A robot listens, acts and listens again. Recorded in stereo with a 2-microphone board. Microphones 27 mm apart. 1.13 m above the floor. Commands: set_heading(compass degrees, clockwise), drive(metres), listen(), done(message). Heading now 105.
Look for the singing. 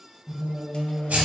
set_heading(165)
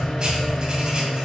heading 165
set_heading(185)
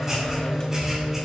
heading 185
done("Found it: singing, straight ahead, 2 to 4 m away.")